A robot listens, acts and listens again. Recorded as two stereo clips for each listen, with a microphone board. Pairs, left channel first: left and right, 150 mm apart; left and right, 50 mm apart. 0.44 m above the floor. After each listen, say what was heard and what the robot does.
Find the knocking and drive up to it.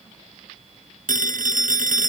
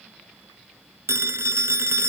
Keep listening.
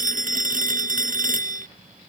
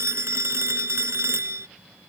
Keep listening.
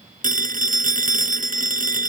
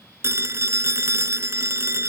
I can't make out knocking, only a phone ringing.